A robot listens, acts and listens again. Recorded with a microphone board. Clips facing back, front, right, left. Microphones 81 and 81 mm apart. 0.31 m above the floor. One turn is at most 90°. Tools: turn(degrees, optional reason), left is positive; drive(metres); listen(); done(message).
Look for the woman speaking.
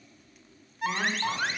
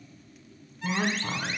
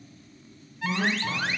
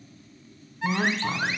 turn(degrees=80, reason="The woman speaking: 80° left.")
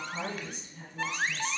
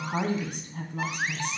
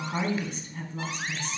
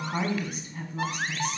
done("Facing the woman speaking.")